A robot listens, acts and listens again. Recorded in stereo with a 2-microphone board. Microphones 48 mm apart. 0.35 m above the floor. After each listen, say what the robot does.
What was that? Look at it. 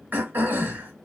Turn 40° right.
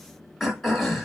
Found it: throat clearing, straight ahead, 2 to 4 m away.